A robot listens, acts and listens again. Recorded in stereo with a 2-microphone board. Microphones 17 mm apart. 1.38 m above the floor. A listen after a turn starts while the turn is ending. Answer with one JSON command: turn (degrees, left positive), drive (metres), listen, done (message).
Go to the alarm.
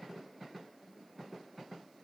{"listen": true}
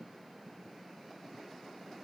{"listen": true}
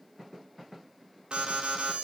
{"turn": -65}
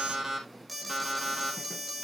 {"drive": 1.0}
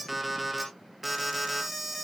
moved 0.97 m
{"drive": 1.0}
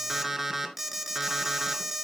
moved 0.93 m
{"turn": -15}
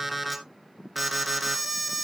{"drive": 1.0}
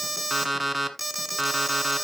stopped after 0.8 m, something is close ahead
{"done": "I am next to the alarm."}